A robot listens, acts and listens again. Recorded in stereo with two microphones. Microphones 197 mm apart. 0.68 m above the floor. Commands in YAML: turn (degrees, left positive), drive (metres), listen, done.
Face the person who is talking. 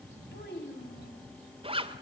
turn: 60
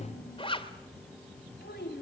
turn: 60
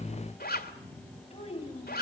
turn: 30
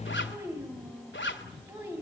turn: -15
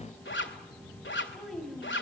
done: "Facing the child speaking."